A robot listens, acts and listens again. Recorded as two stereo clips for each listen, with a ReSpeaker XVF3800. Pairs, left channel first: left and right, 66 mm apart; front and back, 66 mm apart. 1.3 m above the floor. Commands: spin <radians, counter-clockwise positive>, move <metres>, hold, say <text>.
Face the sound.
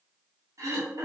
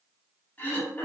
spin -1.05
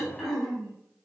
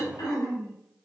say Found it: throat clearing, straight ahead, 2 to 4 m away.